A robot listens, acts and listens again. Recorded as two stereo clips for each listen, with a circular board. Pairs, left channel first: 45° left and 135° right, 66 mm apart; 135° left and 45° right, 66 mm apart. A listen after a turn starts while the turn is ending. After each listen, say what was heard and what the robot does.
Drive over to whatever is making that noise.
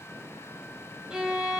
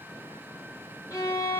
The violin: 145° left. Turn 145° left.
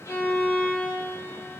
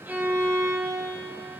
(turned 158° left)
The violin is now 15° right. Turn 15° right.
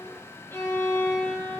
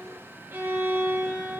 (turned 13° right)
Drive 1.0 m forward.
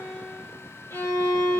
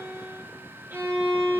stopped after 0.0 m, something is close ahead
Blocked. The violin is further on, straight ahead.